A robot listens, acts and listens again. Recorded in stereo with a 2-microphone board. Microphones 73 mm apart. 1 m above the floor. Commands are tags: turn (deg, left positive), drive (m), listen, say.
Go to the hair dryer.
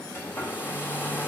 <turn deg="30"/>
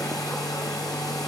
<turn deg="125"/>
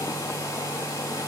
<turn deg="40"/>
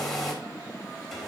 <drive m="1.0"/>
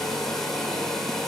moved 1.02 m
<drive m="1.0"/>
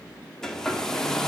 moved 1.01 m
<drive m="1.0"/>
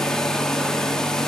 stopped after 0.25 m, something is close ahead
<turn deg="10"/>
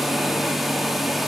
<say>I am next to the hair dryer.</say>